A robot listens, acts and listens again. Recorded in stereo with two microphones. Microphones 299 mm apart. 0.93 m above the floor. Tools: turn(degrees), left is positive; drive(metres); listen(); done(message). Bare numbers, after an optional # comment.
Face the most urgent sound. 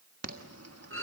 # The alarm: about 50° right or 130° right.
turn(-50)
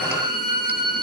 listen()
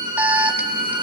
done("Facing the alarm, 1 to 2 m away.")